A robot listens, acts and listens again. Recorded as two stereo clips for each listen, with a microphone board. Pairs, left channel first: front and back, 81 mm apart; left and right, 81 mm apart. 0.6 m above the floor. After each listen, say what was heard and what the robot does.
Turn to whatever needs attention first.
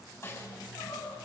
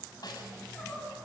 The crying: 15° left. Turn 15° left.
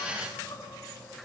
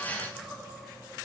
Facing the crying.